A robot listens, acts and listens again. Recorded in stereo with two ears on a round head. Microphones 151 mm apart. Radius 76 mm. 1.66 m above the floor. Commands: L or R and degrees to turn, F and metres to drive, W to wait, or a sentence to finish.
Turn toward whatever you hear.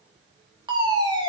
R25
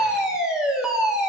Facing the fire alarm, over 4 m away.